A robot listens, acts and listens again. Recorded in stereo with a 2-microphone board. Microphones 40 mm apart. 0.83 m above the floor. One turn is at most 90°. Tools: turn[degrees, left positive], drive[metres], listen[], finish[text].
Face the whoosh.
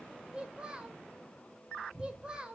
Action: listen[]
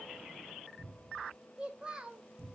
Action: listen[]
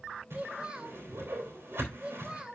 Thought: The whoosh: about 75° right or 105° right.
Action: turn[-75]
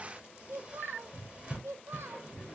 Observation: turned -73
Thought: So it is at 25° right.
Action: turn[-25]
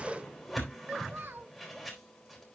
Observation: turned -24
Action: finish[Found it: a whoosh, straight ahead, 2 to 4 m away.]